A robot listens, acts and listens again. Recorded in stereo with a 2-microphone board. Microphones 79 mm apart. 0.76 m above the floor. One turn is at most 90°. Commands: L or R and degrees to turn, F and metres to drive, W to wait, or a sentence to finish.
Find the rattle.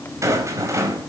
R40
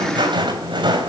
R90
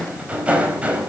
R15
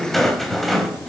Facing the rattle.